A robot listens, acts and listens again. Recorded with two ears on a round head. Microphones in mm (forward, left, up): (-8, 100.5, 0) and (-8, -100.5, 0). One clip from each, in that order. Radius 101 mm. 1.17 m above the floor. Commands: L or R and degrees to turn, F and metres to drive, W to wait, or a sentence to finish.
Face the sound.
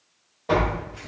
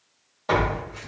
R45
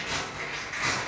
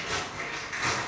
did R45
Found it: tearing paper, straight ahead, 1 to 2 m away.